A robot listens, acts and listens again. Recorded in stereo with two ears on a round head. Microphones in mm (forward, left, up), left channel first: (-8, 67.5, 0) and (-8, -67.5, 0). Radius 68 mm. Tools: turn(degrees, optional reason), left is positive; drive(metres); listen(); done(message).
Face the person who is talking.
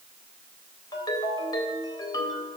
listen()
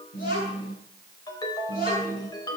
turn(degrees=65, reason="The child speaking: about 65° left or 115° left.")
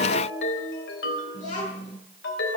turn(degrees=45, reason="So it is at 45° left.")
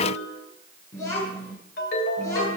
turn(degrees=20, reason="The child speaking is now 20° left.")
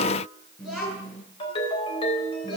done("Facing the child speaking.")